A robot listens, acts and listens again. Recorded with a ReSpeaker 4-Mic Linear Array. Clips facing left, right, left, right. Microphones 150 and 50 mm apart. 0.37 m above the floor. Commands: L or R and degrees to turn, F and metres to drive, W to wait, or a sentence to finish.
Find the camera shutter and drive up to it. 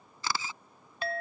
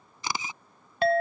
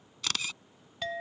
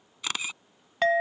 R20
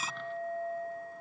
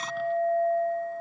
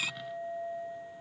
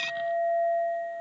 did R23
W
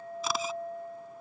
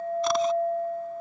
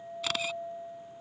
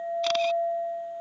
W
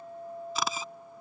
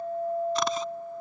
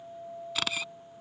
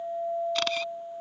I heard a camera shutter, but can't make it out now. It was about 5° left or 140° right. I did not reach it.